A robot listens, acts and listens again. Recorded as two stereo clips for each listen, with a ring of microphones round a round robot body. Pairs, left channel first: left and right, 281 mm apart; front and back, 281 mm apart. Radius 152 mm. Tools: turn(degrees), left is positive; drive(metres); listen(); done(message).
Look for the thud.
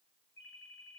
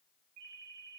listen()
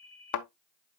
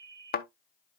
turn(degrees=60)
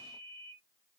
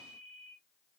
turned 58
done("Facing where the thud came from. I can't hear it now.")